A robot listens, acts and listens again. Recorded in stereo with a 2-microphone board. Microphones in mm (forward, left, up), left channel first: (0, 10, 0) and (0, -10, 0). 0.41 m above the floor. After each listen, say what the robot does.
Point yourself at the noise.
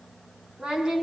Turn 60° right.
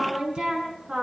Turn 50° right.
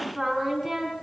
Turn 15° right.
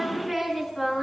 Found it: singing, straight ahead, over 4 m away.